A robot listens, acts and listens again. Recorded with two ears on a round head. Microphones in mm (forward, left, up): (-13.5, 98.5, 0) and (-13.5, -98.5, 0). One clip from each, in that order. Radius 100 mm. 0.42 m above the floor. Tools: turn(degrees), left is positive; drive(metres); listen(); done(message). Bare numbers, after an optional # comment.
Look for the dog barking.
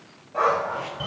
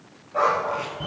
turn(30)
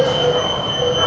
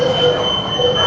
# So it is at 30° right.
turn(-30)
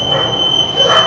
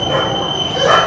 # The dog barking is now 10° right.
turn(-10)
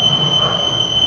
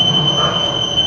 listen()
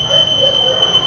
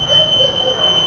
listen()
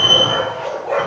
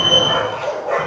done("Facing the dog barking.")